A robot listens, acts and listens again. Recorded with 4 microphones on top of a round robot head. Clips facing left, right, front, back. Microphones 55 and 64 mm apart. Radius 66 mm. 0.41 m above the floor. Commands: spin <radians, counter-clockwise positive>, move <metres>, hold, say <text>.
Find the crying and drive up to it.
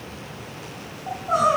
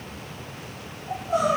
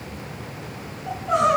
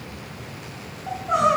spin 1.57
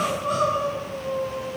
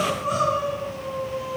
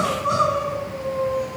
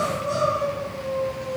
spin -0.17
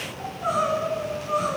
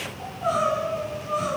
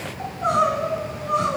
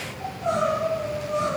move 1.0
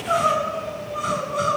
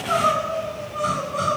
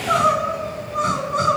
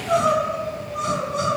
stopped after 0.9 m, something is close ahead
say I am next to the crying.